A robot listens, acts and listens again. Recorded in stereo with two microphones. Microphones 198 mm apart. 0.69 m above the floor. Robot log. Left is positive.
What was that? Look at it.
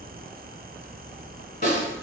note: The snare drum: about 45° left or 135° left.
cmd yaw +45
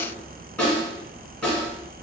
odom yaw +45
end: Found it: a snare drum, straight ahead.